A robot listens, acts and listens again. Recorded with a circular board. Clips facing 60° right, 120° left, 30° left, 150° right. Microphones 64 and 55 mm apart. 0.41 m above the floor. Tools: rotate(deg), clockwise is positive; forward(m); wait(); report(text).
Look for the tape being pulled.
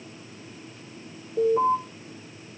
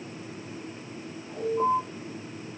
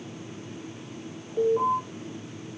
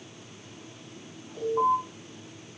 wait()
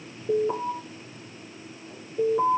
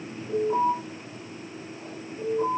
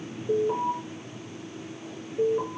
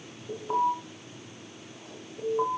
wait()
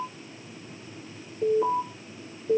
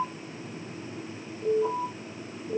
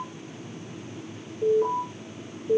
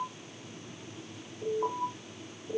report("I can't make out tape being pulled to turn to.")